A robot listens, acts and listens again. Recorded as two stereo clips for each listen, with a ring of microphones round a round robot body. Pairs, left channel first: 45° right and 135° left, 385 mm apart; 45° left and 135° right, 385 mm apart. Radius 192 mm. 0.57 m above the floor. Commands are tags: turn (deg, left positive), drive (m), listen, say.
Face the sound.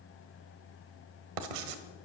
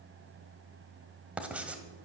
<turn deg="140"/>
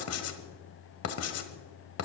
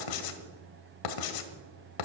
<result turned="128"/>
<turn deg="10"/>
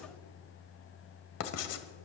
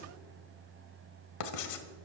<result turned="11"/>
<say>Facing the writing, 1 to 2 m away.</say>